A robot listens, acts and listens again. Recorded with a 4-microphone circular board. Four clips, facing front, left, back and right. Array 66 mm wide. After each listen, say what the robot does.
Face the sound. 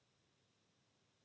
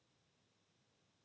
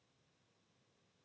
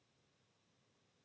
Keep listening.
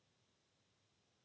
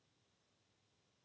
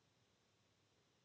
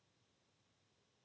Keep listening.
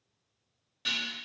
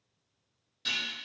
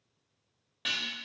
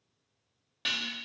Turn 120° right.
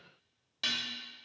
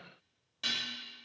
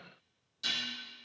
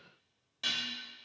Facing the dishes clattering.